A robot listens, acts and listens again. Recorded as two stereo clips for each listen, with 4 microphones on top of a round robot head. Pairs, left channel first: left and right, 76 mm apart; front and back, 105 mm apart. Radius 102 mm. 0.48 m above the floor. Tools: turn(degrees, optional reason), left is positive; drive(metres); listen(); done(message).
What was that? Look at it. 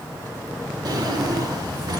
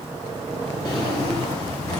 turn(degrees=-60, reason="The drawer: 60° right.")
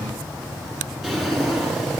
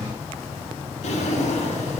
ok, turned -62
done("Found it: a drawer, straight ahead.")